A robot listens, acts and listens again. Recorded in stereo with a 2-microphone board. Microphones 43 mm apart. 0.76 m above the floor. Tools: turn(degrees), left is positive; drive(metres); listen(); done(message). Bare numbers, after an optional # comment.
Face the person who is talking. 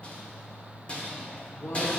# The woman speaking: about 70° left or 110° left.
turn(70)
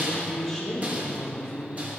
done("Facing the woman speaking, 1 to 2 m away.")